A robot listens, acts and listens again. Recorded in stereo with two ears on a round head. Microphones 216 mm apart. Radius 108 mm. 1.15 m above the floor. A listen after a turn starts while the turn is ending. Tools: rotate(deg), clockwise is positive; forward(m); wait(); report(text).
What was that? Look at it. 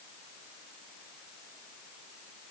wait()
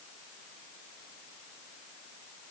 wait()
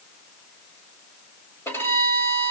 rotate(-30)
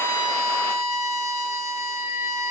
rotate(-140)
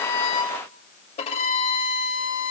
rotate(-25)
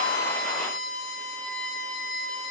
report("Found it: a violin, straight ahead.")